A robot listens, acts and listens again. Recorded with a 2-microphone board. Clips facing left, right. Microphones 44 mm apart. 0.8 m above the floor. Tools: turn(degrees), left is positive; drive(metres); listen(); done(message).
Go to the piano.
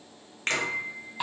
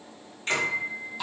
turn(degrees=-30)
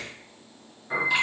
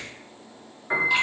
turn(degrees=-140)
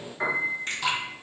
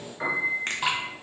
turn(degrees=10)
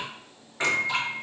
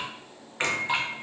drive(metres=1.0)
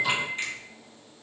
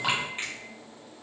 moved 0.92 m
drive(metres=1.0)
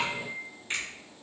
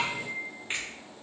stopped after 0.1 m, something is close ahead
done("Arrived at the piano, straight ahead.")